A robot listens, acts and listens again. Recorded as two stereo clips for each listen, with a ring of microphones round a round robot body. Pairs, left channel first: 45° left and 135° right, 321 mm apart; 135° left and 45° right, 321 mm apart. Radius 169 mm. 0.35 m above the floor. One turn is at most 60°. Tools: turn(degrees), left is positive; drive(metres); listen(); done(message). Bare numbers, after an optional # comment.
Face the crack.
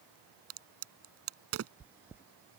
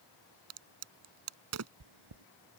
# The crack: 90° right.
turn(-60)
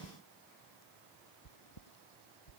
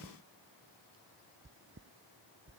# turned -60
# Nothing new. It was at 30° right.
turn(-30)
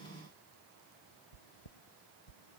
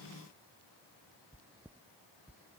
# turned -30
done("Facing where the crack came from. I can't hear it now.")